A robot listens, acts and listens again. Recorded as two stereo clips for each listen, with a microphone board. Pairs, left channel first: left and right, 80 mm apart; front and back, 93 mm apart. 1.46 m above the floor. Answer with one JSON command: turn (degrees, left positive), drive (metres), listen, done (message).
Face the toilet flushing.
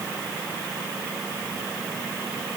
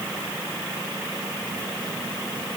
{"listen": true}
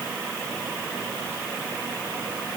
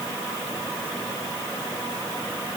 {"listen": true}
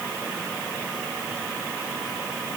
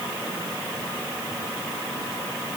{"done": "I can't make out a toilet flushing to turn to."}